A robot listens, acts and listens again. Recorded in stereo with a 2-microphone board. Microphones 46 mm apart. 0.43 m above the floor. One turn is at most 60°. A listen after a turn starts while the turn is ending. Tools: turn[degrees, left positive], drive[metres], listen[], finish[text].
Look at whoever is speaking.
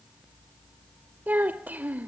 Thought: The child speaking: about 40° right or 140° right.
Action: turn[-40]
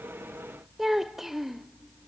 Thought: So it is at 10° right.
Action: turn[-10]
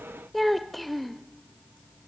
Action: finish[Facing the child speaking, under 1 m away.]